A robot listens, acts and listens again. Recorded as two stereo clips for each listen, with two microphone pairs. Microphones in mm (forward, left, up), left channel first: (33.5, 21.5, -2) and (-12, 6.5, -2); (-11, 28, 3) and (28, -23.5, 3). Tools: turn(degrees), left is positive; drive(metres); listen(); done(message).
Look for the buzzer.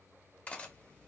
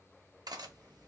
listen()
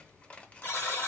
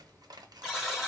turn(degrees=35)
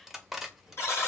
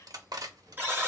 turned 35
done("Found it: a buzzer, straight ahead.")